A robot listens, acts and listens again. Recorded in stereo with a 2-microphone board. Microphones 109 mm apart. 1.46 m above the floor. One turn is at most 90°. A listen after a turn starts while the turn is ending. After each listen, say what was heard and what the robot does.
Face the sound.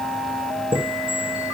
The chime: about 50° right or 130° right. Turn 50° right.
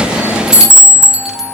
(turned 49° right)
Facing the chime, 1 to 2 m away.